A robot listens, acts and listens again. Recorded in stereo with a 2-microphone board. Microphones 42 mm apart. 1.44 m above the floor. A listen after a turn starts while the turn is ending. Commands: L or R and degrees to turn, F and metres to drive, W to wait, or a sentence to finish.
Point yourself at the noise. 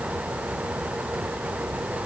W
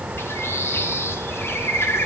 L70
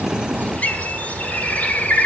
L35
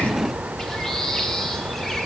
L10
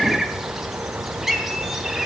Found it: a bird, straight ahead, 1 to 2 m away.